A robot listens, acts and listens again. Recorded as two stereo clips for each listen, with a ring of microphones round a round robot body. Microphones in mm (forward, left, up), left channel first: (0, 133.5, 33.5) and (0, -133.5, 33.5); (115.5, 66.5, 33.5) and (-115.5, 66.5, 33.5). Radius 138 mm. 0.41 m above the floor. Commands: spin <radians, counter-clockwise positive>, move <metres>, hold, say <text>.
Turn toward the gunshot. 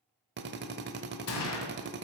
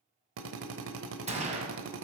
spin 2.09
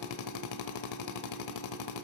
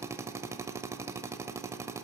say Facing where the gunshot came from. I can't hear it now.